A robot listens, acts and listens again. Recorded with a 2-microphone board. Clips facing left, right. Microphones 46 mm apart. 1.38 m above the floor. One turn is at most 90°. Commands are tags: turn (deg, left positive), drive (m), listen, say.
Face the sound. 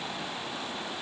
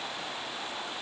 <listen/>
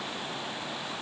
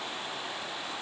<listen/>
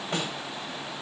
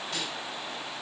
<turn deg="40"/>
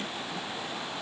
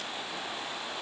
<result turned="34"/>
<listen/>
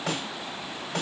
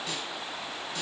<turn deg="90"/>
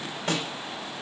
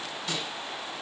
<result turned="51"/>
<turn deg="55"/>
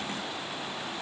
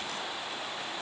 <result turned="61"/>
<turn deg="-10"/>
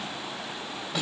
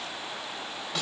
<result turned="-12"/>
<say>Found it: a snare drum, straight ahead, 2 to 4 m away.</say>